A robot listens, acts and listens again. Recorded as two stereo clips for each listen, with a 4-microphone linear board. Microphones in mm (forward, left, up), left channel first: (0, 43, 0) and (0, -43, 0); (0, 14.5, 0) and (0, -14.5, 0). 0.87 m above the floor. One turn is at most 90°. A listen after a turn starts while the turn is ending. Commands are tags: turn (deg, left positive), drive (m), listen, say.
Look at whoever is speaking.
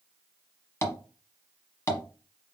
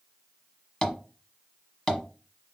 <listen/>
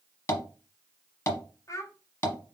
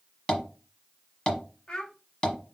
<turn deg="35"/>
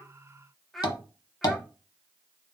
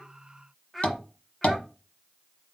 <say>Found it: a child speaking, straight ahead.</say>